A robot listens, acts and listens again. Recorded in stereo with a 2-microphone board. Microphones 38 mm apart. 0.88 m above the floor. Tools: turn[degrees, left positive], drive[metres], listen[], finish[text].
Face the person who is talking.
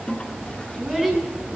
Action: turn[-30]
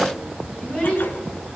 Thought: So it is at 25° left.
Action: turn[25]
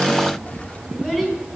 Action: finish[Found it: a child speaking, straight ahead.]